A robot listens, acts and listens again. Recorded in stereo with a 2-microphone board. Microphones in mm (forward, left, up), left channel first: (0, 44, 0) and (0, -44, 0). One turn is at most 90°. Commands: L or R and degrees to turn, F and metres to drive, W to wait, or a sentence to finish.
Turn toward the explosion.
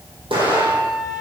R90
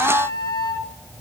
I heard an explosion from this way, but can't make it out now.